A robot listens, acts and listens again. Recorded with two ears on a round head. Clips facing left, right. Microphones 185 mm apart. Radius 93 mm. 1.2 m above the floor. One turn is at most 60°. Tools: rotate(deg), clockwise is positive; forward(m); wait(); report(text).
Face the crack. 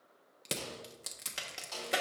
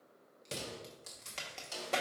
rotate(-30)
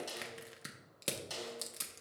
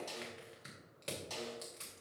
wait()
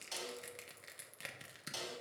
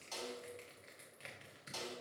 report("I heard a crack, but can't make it out now. It was about 20° right or 140° left.")